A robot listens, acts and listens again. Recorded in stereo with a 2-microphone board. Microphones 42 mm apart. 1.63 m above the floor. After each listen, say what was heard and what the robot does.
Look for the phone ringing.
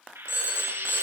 The phone ringing: about 70° left or 110° left. Turn 70° left.
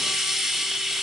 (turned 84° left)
Keep listening.
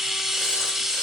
Keep listening.
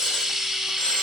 I heard a phone ringing, but can't make it out now. It was about 15° right or 30° left.